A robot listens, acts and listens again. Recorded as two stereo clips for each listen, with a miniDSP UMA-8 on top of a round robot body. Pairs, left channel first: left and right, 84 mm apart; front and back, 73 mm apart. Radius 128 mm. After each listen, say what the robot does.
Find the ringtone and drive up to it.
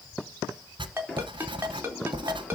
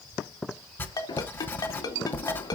Turn 25° right.
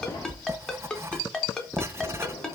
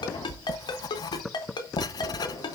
Turn 10° left.
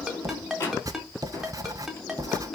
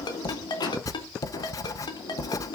Drive 1.0 m forward.
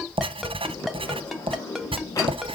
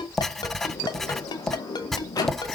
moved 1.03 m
Keep listening.
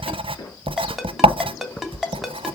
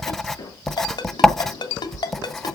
Drive 1.0 m forward.
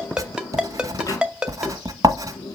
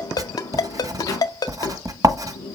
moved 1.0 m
Turn 15° right.
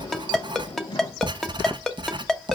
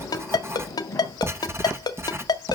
Drive 1.0 m forward.
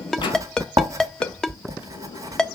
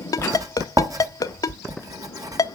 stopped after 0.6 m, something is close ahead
Turn 10° left.
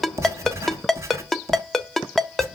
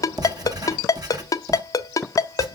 I am next to the ringtone.